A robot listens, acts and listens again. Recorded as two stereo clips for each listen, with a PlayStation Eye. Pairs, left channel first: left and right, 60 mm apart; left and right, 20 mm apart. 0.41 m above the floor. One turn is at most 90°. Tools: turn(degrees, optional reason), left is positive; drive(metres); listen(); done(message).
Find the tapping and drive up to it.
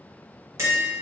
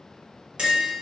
turn(degrees=-55, reason="The tapping: about 55° right or 125° right.")
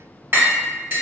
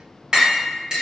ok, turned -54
turn(degrees=-45, reason="So it is at 45° right.")
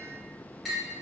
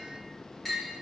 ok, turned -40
drive(metres=1.0)
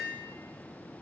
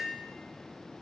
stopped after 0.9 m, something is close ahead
listen()
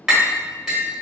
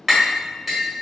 turn(degrees=-10, reason="The tapping is now 10° right.")
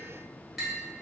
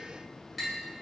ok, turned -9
listen()
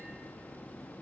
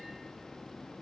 listen()
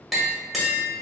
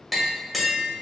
done("I am next to the tapping.")